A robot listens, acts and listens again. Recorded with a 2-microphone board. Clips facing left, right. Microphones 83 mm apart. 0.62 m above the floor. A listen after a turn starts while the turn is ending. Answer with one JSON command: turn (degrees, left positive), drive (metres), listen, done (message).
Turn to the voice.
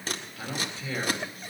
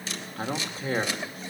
{"turn": -45}
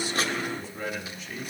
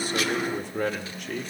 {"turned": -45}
{"turn": -85}
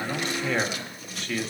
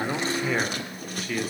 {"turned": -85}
{"done": "Found it: a man speaking, straight ahead."}